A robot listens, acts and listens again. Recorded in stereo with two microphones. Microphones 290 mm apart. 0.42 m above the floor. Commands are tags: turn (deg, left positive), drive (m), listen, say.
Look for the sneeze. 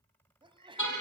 <turn deg="-15"/>
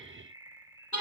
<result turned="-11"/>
<listen/>
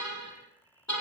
<say>I heard a sneeze, but can't make it out now. It was about 5° right or 150° right.</say>